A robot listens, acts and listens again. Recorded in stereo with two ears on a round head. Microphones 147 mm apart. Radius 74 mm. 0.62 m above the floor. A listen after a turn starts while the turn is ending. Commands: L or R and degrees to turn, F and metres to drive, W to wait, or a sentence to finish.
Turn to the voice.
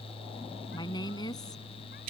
L25
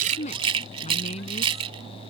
L135
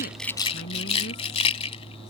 L65
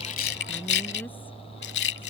W
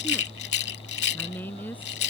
L10
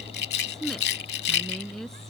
Found it: a woman speaking, straight ahead.